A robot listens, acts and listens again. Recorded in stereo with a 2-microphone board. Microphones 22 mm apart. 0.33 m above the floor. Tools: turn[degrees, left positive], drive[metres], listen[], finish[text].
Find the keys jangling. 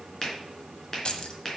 Thought: The keys jangling: about 45° left or 135° left.
Action: turn[45]
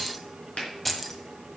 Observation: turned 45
Thought: So it is at 10° left.
Action: turn[10]
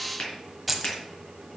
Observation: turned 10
Action: finish[Facing the keys jangling, 1 to 2 m away.]